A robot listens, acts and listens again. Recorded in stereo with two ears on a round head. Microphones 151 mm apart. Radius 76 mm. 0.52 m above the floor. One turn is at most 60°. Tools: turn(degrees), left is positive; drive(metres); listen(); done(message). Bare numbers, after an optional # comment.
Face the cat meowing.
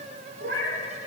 # The cat meowing: about 65° right or 115° right.
turn(-60)
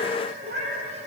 # So it is at 60° right.
turn(-60)
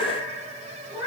# The cat meowing is now 25° right.
turn(-25)
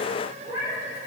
# The cat meowing is now 35° right.
turn(-35)
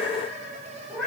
done("Found it: a cat meowing, straight ahead.")